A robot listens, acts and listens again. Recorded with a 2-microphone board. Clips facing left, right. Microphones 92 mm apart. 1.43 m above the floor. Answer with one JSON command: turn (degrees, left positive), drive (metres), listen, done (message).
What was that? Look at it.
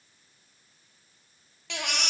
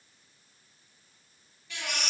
{"turn": 90}
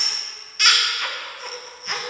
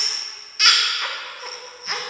{"done": "Facing the baby crying, 1 to 2 m away."}